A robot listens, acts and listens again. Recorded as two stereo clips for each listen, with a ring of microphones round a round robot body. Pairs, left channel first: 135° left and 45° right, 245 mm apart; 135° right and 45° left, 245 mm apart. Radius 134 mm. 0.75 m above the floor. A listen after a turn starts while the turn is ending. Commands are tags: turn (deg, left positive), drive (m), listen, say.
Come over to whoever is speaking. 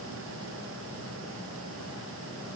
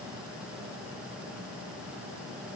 <listen/>
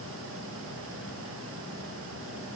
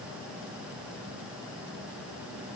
<listen/>
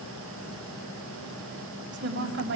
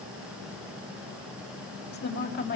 <turn deg="-90"/>
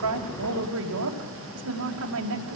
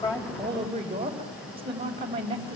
<turn deg="-25"/>
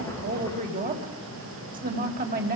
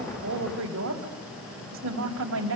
<turn deg="10"/>
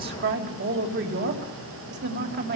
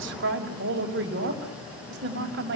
<drive m="1.0"/>
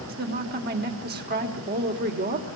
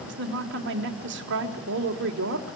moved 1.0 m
<drive m="1.0"/>
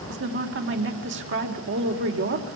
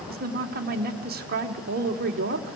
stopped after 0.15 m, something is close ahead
<say>Something is in my way. I am facing the woman speaking but have not reached it.</say>